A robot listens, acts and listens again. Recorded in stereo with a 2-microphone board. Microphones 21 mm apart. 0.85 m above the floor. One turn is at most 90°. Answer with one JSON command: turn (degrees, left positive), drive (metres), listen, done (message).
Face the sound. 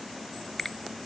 {"turn": 20}
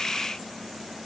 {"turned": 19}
{"listen": true}
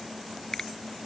{"turn": 90}
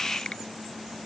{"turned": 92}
{"turn": 50}
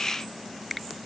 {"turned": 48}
{"done": "Found it: a finger snap, straight ahead."}